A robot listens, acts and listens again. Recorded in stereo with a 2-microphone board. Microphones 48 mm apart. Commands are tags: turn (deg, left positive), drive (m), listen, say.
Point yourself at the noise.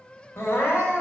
<turn deg="55"/>
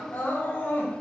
<turn deg="55"/>
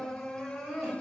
<say>Found it: crying, straight ahead.</say>